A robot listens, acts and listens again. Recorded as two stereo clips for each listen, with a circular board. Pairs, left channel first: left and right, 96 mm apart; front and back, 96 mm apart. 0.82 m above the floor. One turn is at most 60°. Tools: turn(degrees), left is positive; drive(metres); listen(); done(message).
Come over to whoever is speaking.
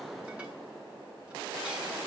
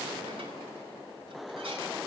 listen()
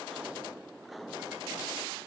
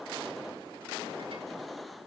listen()
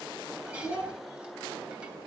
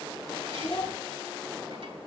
turn(degrees=30)
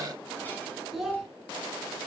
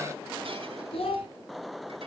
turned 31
drive(metres=1.0)
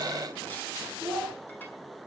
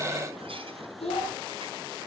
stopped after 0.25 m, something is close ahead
done("Something is in my way. I am facing the child speaking but have not reached it.")